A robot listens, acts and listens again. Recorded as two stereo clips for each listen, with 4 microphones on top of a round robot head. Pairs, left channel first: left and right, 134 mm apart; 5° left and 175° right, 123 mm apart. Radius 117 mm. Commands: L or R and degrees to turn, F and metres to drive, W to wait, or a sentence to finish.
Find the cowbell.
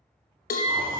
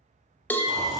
L80
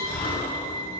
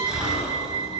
W
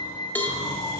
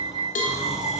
L15
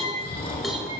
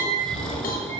W
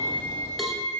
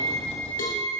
W
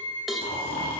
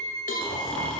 Facing the cowbell.